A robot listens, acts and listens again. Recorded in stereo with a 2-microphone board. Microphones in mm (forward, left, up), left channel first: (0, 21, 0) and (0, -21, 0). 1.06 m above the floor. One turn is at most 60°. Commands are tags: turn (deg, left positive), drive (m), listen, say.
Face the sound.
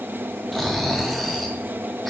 <turn deg="30"/>
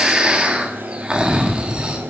<turn deg="-20"/>
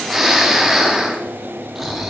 <say>Facing the snoring, 1 to 2 m away.</say>